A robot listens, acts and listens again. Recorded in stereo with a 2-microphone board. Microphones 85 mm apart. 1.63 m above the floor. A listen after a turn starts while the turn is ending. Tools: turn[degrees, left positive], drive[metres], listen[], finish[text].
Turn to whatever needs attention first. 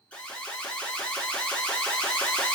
Thought: The alarm: about 15° left or 165° left.
Action: turn[15]
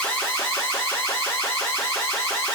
Thought: So it is at 145° left.
Action: turn[145]
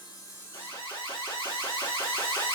Thought: The alarm is now 70° left.
Action: turn[70]
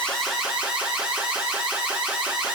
Thought: The alarm is now 15° right.
Action: turn[-15]
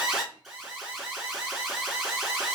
Action: finish[Found it: an alarm, straight ahead.]